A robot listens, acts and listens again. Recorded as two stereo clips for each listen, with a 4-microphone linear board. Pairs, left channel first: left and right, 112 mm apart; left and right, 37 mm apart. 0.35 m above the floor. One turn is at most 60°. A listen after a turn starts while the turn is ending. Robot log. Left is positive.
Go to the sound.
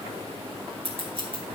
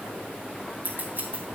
note: The scissors: about 55° right or 125° right.
cmd yaw -55
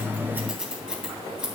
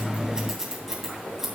note: So it is at 10° right.
cmd yaw -10
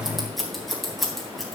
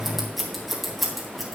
cmd fwd 1.0
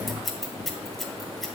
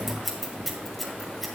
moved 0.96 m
cmd fwd 1.0
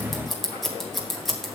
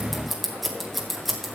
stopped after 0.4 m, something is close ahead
end: I am next to the scissors.